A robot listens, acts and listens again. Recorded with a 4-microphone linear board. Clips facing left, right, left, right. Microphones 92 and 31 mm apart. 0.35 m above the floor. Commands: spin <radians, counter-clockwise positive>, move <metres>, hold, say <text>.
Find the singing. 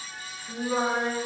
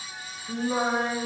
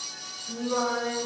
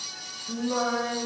spin 0.52
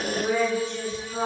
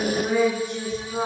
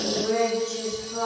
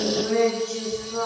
say Found it: singing, straight ahead, 2 to 4 m away.